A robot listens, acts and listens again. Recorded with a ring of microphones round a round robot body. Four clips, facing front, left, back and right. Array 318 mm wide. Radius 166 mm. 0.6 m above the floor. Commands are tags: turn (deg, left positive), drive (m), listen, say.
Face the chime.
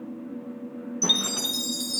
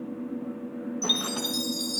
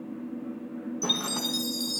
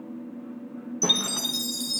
<turn deg="-55"/>
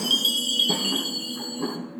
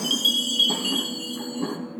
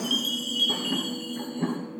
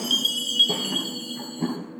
<turn deg="-20"/>
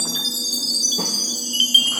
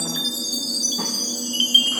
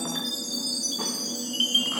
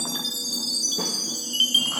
<say>Found it: a chime, straight ahead.</say>